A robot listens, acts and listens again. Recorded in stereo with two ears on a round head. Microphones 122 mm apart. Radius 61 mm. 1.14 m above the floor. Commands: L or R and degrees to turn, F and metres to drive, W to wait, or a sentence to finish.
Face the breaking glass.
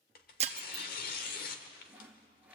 R50
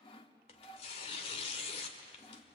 W
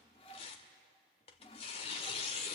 I heard breaking glass, but can't make it out now. It was about straight ahead or 80° right.